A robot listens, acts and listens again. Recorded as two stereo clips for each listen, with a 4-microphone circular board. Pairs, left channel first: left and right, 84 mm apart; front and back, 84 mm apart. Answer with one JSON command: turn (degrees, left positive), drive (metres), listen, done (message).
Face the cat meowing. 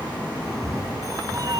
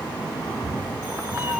{"turn": -120}
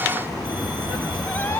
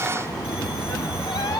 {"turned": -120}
{"turn": 25}
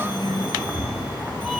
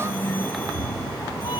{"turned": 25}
{"done": "Found it: a cat meowing, straight ahead, under 1 m away."}